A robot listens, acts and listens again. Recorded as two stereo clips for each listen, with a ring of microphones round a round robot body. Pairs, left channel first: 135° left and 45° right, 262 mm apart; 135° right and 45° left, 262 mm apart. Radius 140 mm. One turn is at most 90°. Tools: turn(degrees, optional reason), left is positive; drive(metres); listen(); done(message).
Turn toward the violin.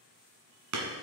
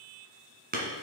listen()
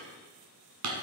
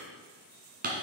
listen()
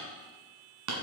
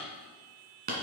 done("I can't make out a violin, only hammering.")